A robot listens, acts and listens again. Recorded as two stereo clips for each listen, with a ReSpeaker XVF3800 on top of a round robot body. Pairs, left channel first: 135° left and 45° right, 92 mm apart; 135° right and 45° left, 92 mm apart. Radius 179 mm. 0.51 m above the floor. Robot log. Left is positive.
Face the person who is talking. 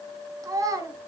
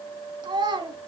end: Facing the child speaking, 2 to 4 m away.